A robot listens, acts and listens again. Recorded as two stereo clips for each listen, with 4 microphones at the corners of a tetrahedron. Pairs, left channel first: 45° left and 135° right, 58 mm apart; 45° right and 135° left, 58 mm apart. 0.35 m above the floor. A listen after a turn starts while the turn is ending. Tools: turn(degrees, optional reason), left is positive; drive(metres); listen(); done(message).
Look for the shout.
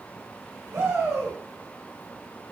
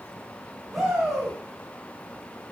turn(degrees=-135, reason="The shout: 135° right.")
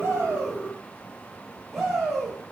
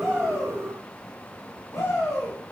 turn(degrees=-45, reason="The shout is now 45° right.")
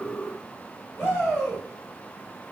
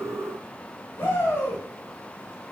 done("Facing the shout.")